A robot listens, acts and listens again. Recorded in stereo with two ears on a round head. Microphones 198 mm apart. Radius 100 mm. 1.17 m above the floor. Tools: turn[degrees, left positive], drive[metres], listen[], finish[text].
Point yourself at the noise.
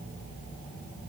Action: listen[]
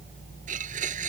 Thought: The blender: about 35° right or 145° right.
Action: turn[-35]
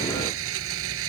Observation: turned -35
Thought: So it is at 105° right.
Action: turn[-105]
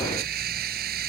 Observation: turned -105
Thought: The blender is now 45° right.
Action: turn[-45]
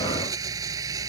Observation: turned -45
Thought: The blender is now 15° right.
Action: turn[-15]
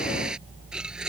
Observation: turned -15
Action: finish[Found it: a blender, straight ahead.]